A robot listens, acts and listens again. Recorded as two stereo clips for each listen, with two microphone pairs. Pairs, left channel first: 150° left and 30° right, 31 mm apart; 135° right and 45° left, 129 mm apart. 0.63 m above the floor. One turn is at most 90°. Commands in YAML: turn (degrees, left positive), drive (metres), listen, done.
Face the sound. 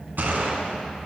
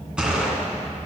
turn: -35
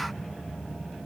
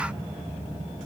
done: "Facing where the gunshot came from. I can't hear it now."